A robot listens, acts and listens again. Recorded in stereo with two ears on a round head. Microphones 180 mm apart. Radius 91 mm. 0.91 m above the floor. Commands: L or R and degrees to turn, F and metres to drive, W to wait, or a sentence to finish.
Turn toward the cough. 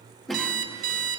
L30
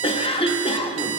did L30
L150
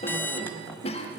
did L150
L35
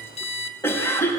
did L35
L10
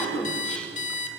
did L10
Facing the cough.